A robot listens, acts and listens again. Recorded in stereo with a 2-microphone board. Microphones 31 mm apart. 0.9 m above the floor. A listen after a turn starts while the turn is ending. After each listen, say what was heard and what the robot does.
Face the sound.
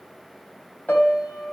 Turn 90° left.
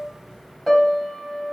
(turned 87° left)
Facing the piano.